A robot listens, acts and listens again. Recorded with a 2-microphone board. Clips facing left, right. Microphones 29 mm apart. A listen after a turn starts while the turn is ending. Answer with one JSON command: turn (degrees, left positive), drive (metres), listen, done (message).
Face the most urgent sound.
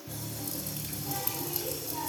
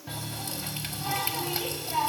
{"listen": true}
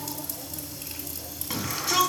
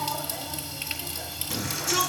{"turn": 35}
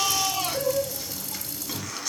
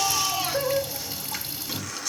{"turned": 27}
{"turn": 10}
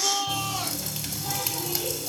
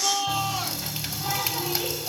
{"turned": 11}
{"done": "Facing the shout."}